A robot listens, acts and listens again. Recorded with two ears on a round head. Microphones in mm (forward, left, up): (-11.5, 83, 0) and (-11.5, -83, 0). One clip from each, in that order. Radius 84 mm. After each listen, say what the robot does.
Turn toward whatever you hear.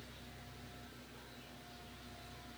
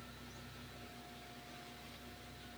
Keep listening.
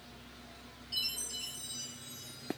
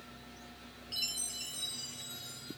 Turn 55° right.
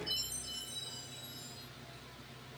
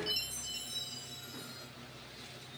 Turn 65° right.
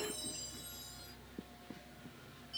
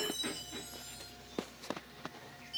Found it: a chime, straight ahead, 2 to 4 m away.